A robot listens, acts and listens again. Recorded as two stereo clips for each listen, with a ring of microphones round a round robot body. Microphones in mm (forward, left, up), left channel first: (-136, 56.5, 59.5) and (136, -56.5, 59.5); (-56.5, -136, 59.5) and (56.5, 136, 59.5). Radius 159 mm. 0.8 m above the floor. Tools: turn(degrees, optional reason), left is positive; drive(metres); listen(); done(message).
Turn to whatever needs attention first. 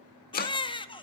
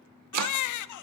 turn(degrees=-130, reason="The baby crying: 130° right.")
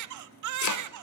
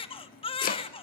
turn(degrees=-40, reason="The baby crying is now 40° right.")
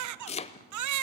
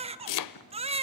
done("Facing the baby crying, 1 to 2 m away.")